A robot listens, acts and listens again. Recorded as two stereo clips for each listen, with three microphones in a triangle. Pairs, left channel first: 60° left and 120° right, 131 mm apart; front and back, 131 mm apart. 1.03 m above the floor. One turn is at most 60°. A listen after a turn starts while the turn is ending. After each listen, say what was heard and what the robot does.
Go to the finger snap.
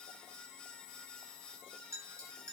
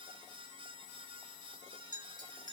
Keep listening.
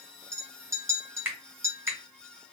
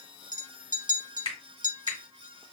The finger snap: 45° right. Turn 45° right.
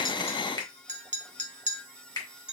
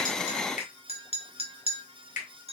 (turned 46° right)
Drive 1.0 m forward.
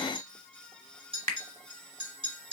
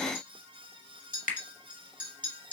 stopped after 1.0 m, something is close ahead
I am next to the finger snap.